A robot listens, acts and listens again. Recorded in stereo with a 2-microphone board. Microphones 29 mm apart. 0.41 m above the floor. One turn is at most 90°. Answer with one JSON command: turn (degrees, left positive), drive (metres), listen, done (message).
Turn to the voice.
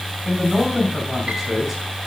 {"turn": -30}
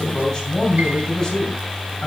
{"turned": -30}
{"turn": 25}
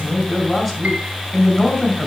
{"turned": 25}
{"turn": 10}
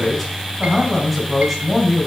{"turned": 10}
{"done": "Facing the man speaking."}